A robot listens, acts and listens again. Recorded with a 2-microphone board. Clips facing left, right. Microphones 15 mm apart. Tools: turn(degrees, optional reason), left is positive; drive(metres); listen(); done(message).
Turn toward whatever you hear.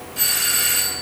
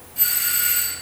turn(degrees=30, reason="The doorbell: about 30° left or 150° left.")
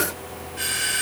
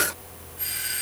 turn(degrees=115, reason="So it is at 115° left.")
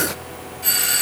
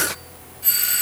turn(degrees=25, reason="The doorbell is now 25° left.")
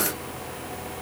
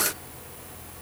listen()
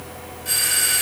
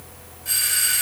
turn(degrees=10, reason="The doorbell is now 10° left.")
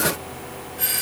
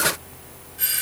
done("Facing the doorbell, 2 to 4 m away.")